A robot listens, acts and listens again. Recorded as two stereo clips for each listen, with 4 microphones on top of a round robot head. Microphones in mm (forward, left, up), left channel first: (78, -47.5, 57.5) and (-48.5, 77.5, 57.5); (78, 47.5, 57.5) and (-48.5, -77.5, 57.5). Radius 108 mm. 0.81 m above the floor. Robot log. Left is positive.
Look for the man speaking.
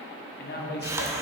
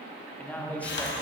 note: The man speaking: 35° right.
cmd yaw -35
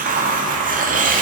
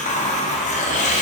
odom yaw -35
cmd idle
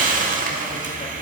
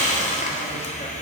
cmd idle
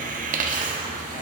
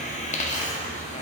end: Facing where the man speaking came from. I can't hear it now.